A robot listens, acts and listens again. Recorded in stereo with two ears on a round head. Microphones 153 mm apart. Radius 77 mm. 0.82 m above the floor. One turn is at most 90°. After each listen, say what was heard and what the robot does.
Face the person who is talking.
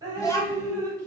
The child speaking: about 20° left or 160° left. Turn 20° left.
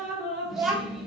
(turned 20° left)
Facing the child speaking.